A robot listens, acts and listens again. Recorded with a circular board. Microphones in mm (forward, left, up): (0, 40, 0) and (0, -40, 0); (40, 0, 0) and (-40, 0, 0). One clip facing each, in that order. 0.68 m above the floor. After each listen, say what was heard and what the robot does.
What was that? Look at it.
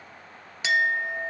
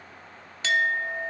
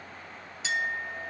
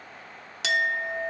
The clink: 165° left. Turn 165° left.
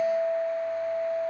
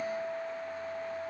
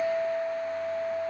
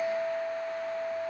The clink is now 60° left. Turn 60° left.
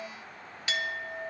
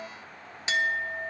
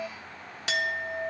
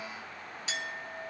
The clink is now 25° right. Turn 25° right.
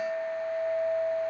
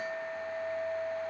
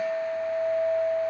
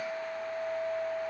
Facing the clink.